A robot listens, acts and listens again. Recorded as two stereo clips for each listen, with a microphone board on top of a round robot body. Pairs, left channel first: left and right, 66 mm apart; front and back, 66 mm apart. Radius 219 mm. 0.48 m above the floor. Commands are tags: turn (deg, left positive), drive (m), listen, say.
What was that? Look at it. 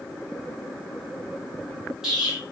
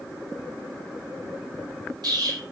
<turn deg="-170"/>
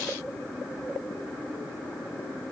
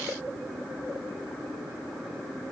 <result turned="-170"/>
<say>Facing where the explosion came from. I can't hear it now.</say>